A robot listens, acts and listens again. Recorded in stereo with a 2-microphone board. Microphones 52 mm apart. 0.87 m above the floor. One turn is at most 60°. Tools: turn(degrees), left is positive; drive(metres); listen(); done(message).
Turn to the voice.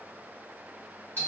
listen()
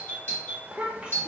turn(degrees=-20)
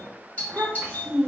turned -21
turn(degrees=-60)
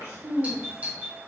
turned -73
turn(degrees=-60)
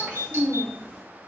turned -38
turn(degrees=-30)
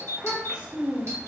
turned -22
turn(degrees=-10)
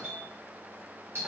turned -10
listen()
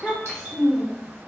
done("Facing the child speaking, under 1 m away.")